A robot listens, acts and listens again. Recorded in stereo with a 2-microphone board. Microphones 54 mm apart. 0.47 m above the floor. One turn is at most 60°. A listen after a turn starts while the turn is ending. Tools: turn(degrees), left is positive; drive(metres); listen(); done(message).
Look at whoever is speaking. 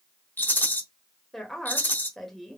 turn(degrees=30)
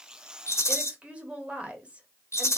turn(degrees=-25)
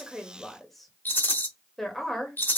done("Facing the woman speaking.")